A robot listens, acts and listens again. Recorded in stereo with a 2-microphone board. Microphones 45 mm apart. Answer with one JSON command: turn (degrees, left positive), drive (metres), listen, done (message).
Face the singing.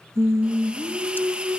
{"turn": -65}
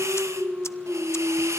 {"turn": -40}
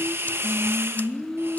{"done": "Facing the singing."}